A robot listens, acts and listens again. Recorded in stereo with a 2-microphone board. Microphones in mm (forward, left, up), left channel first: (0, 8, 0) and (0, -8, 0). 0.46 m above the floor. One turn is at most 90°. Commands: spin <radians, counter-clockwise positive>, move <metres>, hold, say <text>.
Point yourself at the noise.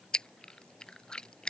spin 1.31
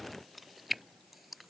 say Facing the chewing.